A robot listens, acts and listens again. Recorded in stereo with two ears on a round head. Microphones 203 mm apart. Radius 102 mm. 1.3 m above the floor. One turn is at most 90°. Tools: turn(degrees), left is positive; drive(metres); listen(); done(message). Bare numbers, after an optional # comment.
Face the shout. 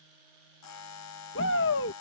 # The shout: about 60° left or 120° left.
turn(60)
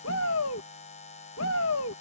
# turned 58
# So it is at 60° left.
turn(60)
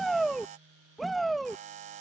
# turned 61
done("Found it: a shout, straight ahead.")